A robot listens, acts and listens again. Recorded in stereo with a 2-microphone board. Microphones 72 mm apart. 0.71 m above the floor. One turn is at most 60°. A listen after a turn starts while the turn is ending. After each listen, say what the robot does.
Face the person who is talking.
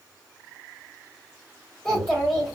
Turn 30° left.
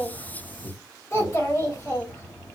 Turn 60° left.
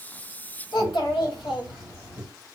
Turn 60° left.
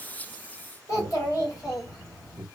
Turn 50° left.
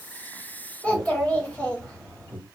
Turn 20° left.
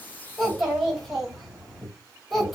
Facing the child speaking.